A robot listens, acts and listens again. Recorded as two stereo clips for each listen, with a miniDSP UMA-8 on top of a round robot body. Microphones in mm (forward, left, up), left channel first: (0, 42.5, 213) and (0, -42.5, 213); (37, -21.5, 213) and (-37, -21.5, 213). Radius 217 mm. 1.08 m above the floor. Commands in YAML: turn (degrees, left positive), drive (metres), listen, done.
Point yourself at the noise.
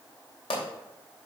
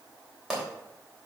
turn: 95
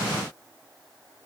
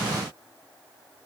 done: "I heard a pop from this way, but can't make it out now."